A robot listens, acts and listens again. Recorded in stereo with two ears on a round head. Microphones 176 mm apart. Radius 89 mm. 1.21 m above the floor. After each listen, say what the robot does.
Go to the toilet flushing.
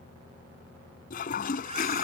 Turn 45° left.
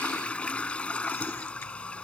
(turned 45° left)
Drive 1.0 m forward.
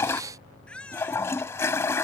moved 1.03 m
Turn 20° left.
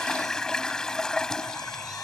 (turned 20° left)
Drive 1.0 m forward.
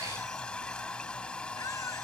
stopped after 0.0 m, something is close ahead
Turn 10° left.
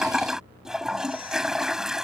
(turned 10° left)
I am next to the toilet flushing.